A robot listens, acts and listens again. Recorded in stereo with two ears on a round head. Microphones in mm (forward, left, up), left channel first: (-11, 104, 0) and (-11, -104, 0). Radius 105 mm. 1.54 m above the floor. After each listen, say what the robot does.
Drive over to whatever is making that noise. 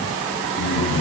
Turn 50° left.
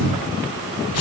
Turn 75° left.
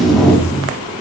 Drive 1.0 m forward.
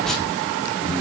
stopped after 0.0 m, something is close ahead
Blocked. The tape being pulled is further on, straight ahead.